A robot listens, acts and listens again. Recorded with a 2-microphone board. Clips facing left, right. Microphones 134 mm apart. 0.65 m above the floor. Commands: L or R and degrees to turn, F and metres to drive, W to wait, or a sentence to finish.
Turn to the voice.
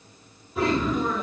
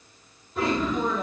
R55
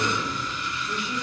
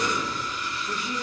R50
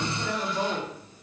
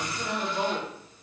R10
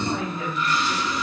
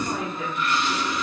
Facing the woman speaking, 1 to 2 m away.